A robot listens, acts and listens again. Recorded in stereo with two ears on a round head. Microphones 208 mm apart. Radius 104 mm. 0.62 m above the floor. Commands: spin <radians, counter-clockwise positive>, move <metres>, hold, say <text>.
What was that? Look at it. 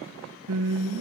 spin -1.31
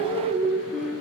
say Facing the singing, 2 to 4 m away.